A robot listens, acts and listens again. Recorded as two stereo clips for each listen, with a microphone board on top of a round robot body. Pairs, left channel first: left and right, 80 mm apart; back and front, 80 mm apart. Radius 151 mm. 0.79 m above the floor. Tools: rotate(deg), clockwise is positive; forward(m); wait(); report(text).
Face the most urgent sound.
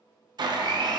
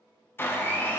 wait()
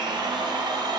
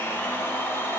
wait()
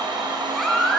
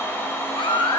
rotate(-180)
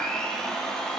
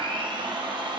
wait()
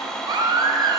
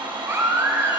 rotate(60)
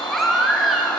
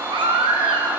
report("Facing the baby crying, under 1 m away.")